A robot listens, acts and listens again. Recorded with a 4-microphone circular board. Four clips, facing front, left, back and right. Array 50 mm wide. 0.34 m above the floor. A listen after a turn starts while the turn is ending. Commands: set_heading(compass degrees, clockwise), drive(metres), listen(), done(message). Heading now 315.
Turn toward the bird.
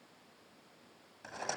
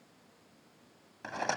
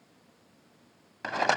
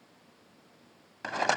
listen()
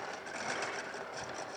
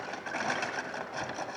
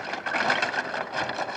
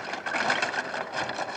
listen()
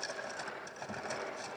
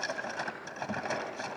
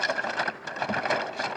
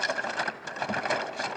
done("I can't make out a bird, only a rattle.")